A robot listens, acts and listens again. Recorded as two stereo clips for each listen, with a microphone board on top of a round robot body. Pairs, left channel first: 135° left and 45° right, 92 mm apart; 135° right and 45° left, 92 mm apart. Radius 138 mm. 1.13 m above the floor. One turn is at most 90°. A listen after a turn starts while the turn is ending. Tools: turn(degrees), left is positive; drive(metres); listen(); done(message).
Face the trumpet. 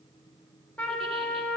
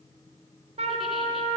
turn(degrees=60)
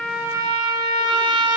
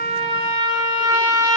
done("Found it: a trumpet, straight ahead.")